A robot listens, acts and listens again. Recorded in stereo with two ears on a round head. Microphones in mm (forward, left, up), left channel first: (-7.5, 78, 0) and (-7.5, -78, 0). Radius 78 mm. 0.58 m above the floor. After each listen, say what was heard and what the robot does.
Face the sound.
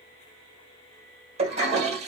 The toilet flushing: about 40° right or 140° right. Turn 40° right.
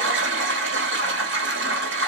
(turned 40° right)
So it is at 100° right. Turn 100° right.
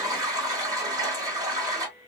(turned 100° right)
The toilet flushing is now 20° right. Turn 20° right.
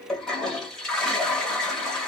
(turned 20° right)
Facing the toilet flushing, 1 to 2 m away.